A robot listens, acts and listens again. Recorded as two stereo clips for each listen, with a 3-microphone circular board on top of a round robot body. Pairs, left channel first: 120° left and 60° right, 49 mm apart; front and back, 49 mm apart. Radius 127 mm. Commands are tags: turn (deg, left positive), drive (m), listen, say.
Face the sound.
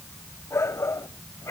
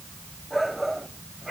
<turn deg="90"/>
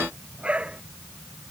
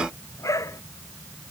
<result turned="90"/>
<say>Facing the shout.</say>